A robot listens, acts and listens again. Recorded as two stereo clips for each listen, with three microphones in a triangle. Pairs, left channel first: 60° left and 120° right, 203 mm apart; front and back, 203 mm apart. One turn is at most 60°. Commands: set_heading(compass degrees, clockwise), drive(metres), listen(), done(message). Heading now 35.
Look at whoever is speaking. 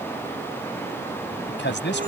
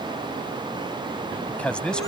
set_heading(335)
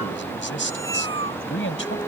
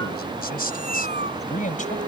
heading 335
set_heading(285)
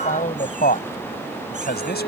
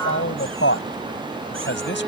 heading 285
set_heading(260)
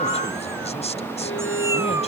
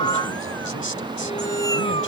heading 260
listen()
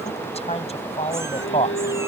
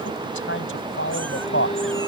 done("Facing the man speaking.")